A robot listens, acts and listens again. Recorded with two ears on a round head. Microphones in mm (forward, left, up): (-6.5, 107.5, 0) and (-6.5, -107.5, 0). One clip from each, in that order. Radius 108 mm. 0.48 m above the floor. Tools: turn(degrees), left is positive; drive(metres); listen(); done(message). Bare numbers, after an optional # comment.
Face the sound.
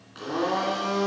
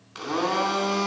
turn(-90)
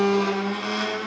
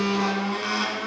# So it is at 10° right.
turn(-10)
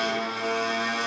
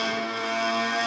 done("Found it: a blender, straight ahead, 2 to 4 m away.")